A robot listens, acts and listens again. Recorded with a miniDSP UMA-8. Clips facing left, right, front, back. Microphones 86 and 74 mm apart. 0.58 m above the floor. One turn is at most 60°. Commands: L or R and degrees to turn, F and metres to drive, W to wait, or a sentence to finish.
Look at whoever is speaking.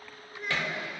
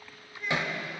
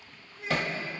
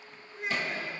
L60
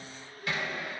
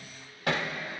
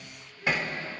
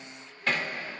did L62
L60
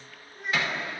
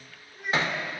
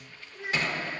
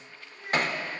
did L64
Facing the child speaking.